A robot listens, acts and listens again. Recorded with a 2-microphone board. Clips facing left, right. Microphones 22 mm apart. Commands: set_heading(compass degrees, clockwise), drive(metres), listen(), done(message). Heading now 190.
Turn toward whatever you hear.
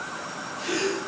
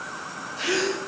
set_heading(245)
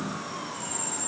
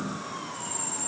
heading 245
listen()
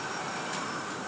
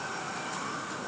done("I heard a gasp, but can't make it out now. It was about straight ahead or 70° right.")